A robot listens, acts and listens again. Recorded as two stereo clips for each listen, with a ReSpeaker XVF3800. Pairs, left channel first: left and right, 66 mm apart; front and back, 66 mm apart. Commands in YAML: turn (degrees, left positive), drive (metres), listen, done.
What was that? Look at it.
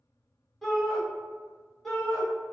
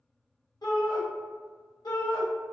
done: "Found it: a shout, straight ahead, 1 to 2 m away."